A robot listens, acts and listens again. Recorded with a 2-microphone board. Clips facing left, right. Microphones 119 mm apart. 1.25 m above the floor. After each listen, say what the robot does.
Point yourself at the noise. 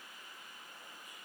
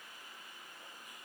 Keep listening.
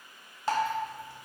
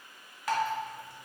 Turn 30° left.
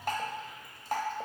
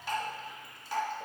Turn 120° left.
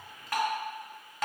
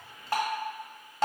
Turn 35° right.
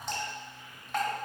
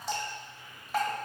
Found it: dripping, straight ahead, 1 to 2 m away.